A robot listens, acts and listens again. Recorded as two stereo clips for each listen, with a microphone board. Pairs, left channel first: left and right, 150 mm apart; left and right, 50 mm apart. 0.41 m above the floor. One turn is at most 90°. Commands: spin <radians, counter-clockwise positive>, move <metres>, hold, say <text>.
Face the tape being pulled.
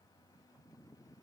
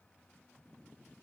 hold
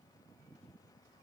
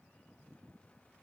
hold
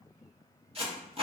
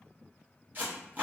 spin -0.70
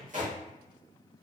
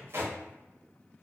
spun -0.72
spin -1.57
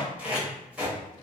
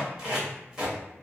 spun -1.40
spin -0.17
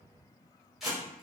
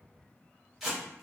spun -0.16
say Facing the tape being pulled, 1 to 2 m away.